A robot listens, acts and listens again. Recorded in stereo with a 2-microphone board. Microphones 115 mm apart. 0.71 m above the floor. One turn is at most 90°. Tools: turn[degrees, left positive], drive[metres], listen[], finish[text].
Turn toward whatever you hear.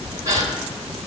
Thought: The gasp: about 35° right or 145° right.
Action: turn[-35]
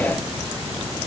Action: listen[]
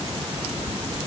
Action: finish[I heard a gasp, but can't make it out now. It was about straight ahead or 110° right.]